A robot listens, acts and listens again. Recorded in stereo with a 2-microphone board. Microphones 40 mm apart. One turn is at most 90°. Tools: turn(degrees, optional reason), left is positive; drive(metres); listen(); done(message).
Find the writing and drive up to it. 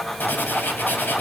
turn(degrees=55, reason="The writing: about 55° left or 125° left.")
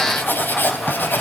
turn(degrees=65, reason="So it is at 65° left.")
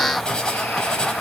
turn(degrees=25, reason="The writing is now 25° left.")
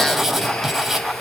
turn(degrees=-10, reason="The writing is now 10° right.")
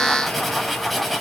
drive(metres=1.0)
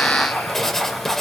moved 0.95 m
turn(degrees=10, reason="The writing is now 10° left.")
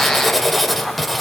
drive(metres=1.0)
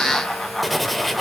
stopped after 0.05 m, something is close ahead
done("I am next to the writing.")